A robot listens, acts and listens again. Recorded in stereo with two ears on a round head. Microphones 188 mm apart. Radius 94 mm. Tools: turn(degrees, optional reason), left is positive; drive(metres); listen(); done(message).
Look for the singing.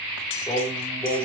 turn(degrees=30)
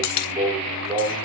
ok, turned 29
turn(degrees=-20, reason="So it is at 20° right.")
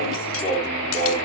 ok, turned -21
done("Facing the singing, over 4 m away.")